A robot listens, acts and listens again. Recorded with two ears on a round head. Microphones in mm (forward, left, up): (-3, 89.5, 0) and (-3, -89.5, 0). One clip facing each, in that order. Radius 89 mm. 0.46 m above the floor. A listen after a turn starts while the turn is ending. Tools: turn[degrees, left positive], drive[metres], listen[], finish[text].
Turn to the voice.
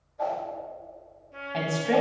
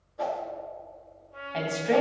Action: turn[30]
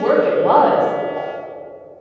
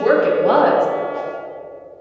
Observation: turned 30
Thought: So it is at 30° right.
Action: turn[-30]
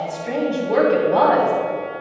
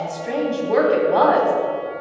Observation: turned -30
Action: finish[Found it: a woman speaking, straight ahead.]